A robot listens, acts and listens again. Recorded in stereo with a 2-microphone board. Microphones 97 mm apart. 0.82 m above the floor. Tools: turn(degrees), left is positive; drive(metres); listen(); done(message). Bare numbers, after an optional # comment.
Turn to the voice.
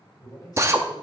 # The man speaking: about 45° left or 135° left.
turn(45)
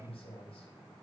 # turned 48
# So it is at 90° left.
turn(90)
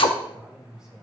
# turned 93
done("Found it: a man speaking, straight ahead.")